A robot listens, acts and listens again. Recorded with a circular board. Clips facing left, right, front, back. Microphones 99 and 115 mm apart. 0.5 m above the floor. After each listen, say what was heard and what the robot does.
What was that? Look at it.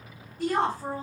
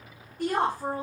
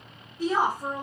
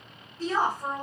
The woman speaking: 75° right. Turn 75° right.
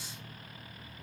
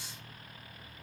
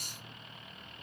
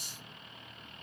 Keep listening.
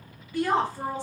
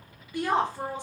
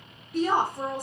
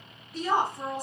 The woman speaking is now 20° right. Turn 20° right.
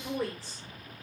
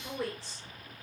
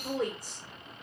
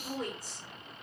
Facing the woman speaking.